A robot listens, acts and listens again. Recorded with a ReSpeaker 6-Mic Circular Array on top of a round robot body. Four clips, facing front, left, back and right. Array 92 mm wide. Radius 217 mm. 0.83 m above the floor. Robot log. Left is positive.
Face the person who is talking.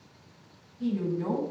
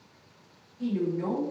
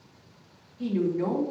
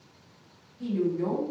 note: The woman speaking: 165° left.
cmd yaw +165
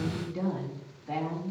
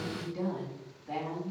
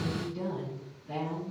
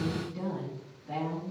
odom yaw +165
note: The woman speaking is now 15° left.
cmd yaw +15
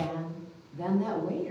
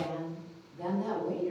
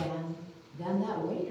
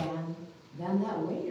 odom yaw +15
end: Facing the woman speaking, 2 to 4 m away.